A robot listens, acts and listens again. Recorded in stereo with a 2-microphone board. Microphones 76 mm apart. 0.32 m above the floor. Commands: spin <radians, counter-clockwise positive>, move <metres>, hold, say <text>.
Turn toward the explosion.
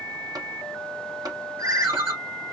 hold
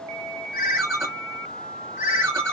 hold
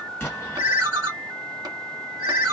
spin 0.35
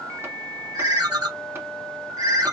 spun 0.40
hold
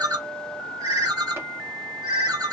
say I heard an explosion, but can't make it out now. It was about straight ahead or 135° left.